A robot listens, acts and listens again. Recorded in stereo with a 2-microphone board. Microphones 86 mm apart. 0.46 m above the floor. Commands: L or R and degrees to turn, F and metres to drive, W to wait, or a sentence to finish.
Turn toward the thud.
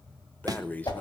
R45
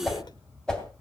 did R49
W
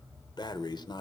I heard a thud, but can't make it out now. It was about 5° left or 85° right.